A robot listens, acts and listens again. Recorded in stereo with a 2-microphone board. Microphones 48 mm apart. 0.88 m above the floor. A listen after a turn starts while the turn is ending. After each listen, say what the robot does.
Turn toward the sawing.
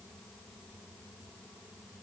Keep listening.
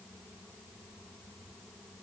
Keep listening.
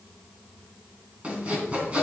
Turn 25° right.
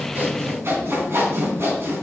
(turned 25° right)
Turn 125° right.
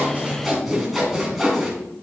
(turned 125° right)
Facing the sawing.